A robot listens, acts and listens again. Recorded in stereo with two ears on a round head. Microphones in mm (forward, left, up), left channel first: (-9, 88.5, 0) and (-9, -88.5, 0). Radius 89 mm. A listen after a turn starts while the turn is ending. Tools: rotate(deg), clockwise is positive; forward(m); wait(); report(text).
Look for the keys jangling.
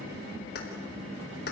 rotate(-55)
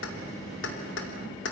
rotate(-60)
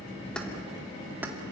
wait()
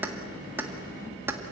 rotate(10)
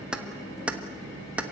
report("Facing the keys jangling.")